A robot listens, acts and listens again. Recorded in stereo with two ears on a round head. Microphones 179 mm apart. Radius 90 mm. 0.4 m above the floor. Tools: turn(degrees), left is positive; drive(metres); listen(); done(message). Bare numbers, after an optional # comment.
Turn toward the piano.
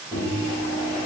listen()
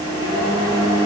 listen()
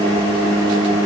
done("I can't make out a piano to turn to.")